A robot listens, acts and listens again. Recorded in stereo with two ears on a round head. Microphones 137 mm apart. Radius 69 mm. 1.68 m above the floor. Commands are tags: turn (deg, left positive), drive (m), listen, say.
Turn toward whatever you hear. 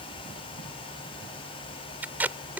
<turn deg="-30"/>
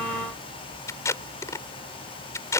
<turn deg="20"/>
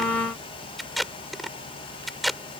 <say>Facing the tape being pulled.</say>